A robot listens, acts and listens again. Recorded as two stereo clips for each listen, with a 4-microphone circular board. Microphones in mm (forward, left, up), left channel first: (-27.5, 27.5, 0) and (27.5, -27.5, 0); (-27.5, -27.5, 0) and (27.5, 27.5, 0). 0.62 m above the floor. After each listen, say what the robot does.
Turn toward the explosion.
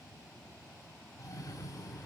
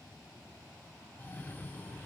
Keep listening.
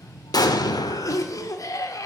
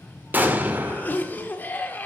Turn 110° left.
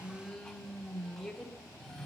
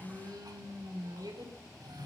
Facing where the explosion came from. I can't hear it now.